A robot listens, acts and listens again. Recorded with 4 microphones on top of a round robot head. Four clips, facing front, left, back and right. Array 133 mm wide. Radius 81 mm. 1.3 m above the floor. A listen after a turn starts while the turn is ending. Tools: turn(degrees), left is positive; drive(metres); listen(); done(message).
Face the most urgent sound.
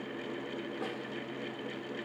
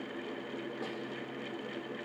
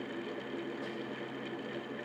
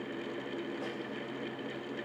listen()
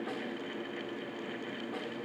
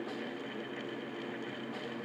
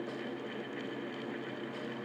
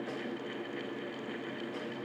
listen()
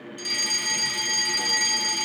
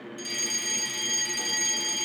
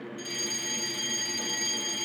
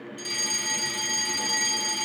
turn(degrees=-10)
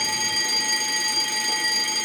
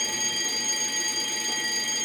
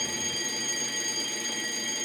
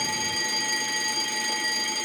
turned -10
done("Facing the fire alarm, 2 to 4 m away.")